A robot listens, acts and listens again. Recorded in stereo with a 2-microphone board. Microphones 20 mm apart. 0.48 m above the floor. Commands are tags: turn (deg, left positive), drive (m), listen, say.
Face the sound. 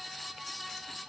<listen/>
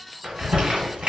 <turn deg="-65"/>
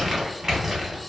<turn deg="-25"/>
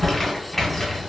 <turn deg="10"/>
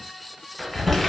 <say>Facing the crumpling, 1 to 2 m away.</say>